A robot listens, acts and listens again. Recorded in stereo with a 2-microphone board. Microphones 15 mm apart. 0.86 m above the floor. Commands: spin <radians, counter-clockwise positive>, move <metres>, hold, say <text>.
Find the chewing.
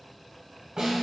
hold
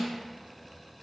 hold
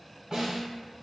say I can't make out chewing, only a snare drum.